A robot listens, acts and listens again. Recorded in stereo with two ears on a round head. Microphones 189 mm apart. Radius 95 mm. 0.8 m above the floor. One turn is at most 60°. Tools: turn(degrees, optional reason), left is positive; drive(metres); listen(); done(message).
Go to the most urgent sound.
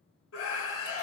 turn(degrees=60, reason="The scream: about 70° left or 110° left.")
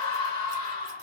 turn(degrees=30, reason="So it is at 30° left.")
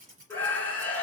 turn(degrees=10, reason="The scream is now 10° left.")
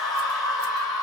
drive(metres=1.0)
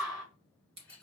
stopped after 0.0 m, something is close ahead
done("Blocked. The scream is further on, straight ahead.")